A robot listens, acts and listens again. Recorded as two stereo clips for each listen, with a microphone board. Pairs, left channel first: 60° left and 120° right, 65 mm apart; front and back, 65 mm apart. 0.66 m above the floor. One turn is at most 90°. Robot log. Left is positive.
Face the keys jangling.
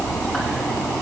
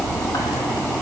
cmd idle
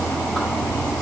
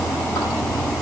cmd idle
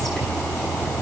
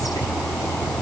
end: I can't make out keys jangling to turn to.